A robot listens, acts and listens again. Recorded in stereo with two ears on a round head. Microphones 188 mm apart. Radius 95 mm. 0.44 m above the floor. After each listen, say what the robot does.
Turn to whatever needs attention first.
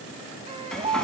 Turn 25° right.
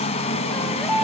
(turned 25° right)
Facing the baby crying.